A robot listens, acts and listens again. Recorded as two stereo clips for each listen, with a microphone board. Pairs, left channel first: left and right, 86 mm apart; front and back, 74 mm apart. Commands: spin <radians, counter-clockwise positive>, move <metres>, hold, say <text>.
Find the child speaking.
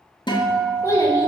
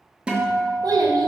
spin 2.53
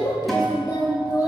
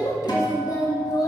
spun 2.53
spin 0.87
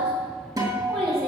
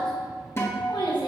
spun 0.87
say Facing the child speaking.